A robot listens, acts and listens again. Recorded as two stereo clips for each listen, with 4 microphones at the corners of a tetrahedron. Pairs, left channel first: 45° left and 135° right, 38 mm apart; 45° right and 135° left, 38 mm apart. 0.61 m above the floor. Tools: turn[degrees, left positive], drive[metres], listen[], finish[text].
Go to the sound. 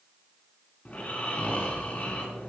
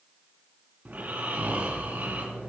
Thought: The snoring: 95° left.
Action: turn[95]
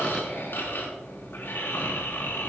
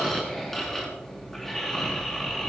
Thought: The snoring is now 35° left.
Action: turn[35]
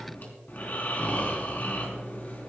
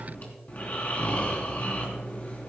Action: drive[1.0]
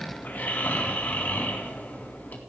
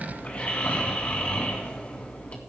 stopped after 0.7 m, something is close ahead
Action: finish[Blocked. The snoring is further on, straight ahead.]